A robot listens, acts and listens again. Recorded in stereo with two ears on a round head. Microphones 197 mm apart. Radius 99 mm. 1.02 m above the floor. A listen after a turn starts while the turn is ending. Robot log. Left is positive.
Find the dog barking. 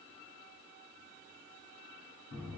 cmd idle
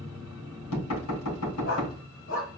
note: The dog barking: about 70° left or 110° left.
cmd yaw +70
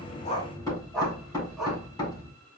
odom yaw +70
end: Found it: a dog barking, straight ahead, 2 to 4 m away.